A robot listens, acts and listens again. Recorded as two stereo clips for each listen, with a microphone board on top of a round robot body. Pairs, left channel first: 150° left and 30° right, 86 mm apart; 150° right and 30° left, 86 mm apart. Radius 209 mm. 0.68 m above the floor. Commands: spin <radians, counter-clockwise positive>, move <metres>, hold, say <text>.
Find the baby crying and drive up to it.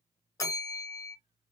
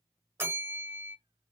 hold
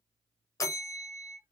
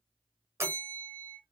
hold
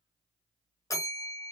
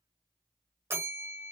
say I can't make out a baby crying, only a bell.